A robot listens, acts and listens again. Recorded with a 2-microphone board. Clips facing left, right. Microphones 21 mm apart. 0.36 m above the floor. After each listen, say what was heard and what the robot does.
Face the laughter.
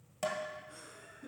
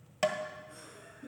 Turn 30° left.
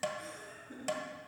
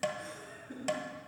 So it is at 30° right. Turn 30° right.
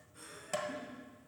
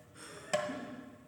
The laughter is now 30° right. Turn 30° right.
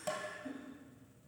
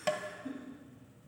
The laughter is now 15° right. Turn 15° right.
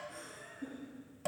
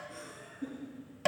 The laughter is now 10° right. Turn 10° right.
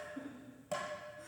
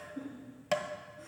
Found it: laughter, straight ahead.